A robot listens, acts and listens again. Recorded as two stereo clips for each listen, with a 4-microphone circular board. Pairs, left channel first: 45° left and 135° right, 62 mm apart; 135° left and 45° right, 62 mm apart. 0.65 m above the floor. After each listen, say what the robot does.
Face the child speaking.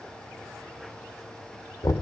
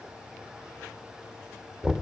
Keep listening.
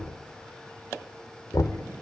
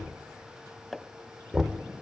Keep listening.
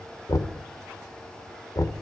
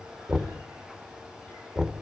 I can't make out a child speaking, only knocking.